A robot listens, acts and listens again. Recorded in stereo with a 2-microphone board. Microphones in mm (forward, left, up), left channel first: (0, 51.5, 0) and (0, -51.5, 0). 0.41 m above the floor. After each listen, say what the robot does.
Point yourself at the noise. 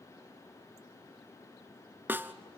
Turn 20° right.
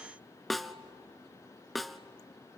Found it: a snare drum, straight ahead.